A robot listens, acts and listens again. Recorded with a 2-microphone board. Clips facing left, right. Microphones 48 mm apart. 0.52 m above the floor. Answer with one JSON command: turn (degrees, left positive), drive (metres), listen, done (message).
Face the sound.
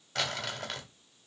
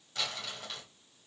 {"turn": 60}
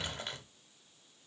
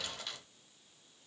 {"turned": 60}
{"turn": 35}
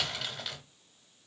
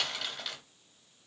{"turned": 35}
{"done": "Found it: crumpling, straight ahead."}